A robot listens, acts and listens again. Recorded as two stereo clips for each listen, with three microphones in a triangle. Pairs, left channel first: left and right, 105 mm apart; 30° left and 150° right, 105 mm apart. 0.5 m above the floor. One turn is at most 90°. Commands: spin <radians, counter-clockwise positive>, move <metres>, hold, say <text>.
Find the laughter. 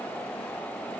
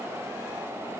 hold
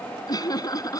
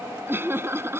spin 1.57
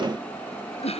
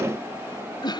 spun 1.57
spin 1.40
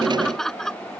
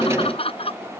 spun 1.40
say Found it: laughter, straight ahead.